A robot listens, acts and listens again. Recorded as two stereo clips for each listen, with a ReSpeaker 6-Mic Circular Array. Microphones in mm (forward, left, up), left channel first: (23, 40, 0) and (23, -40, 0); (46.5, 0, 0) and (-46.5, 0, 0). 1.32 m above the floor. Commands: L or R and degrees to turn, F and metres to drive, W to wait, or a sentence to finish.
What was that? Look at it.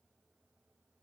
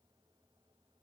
W
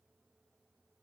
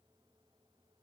W
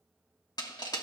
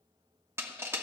L120
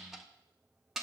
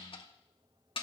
Found it: crushing, straight ahead.